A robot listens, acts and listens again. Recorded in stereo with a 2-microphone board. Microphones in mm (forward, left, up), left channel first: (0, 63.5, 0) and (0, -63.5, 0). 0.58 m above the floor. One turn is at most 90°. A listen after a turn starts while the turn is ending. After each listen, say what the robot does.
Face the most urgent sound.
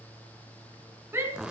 Turn 15° right.
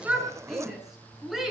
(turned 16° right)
Found it: a shout, straight ahead, over 4 m away.